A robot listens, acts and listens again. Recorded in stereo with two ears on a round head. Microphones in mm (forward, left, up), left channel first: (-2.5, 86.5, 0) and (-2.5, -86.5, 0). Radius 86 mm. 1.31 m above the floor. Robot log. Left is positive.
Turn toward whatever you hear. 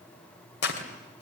note: The tearing paper: about 65° left or 115° left.
cmd yaw +65
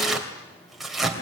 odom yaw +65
end: Facing the tearing paper.